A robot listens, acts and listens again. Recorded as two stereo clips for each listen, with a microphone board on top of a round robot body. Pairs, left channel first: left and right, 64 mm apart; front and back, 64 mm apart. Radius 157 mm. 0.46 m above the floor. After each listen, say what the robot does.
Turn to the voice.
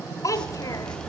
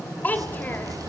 Turn 60° left.
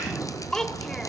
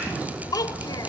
Turn 10° left.
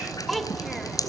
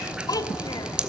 Found it: a child speaking, straight ahead, 2 to 4 m away.